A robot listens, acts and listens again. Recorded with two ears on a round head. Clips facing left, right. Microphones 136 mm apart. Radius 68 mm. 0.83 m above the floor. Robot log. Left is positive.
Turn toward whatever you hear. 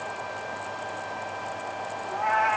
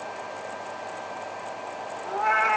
note: The cat meowing: about 60° right or 120° right.
cmd yaw -60
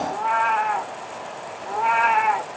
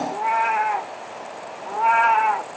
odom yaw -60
note: So it is at 10° left.
cmd yaw +10
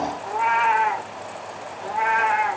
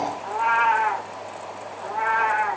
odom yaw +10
note: The cat meowing is now 20° left.
cmd yaw +20
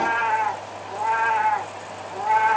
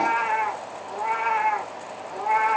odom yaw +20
end: Found it: a cat meowing, straight ahead.